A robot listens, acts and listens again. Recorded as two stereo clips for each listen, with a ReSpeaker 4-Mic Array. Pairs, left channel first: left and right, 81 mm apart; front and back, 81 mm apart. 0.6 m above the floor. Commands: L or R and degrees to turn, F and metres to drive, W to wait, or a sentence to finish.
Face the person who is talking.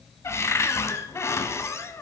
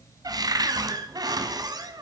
W
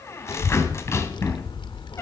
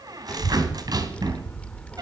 L75
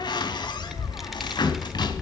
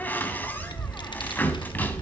Found it: a child speaking, straight ahead.